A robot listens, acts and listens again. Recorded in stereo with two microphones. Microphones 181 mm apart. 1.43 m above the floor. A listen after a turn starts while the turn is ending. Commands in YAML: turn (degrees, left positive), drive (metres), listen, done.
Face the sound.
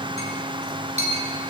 turn: -40
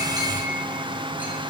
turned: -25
listen: true
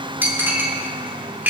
turn: -10
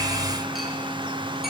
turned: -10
listen: true
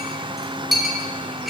done: "Found it: a clink, straight ahead, 2 to 4 m away."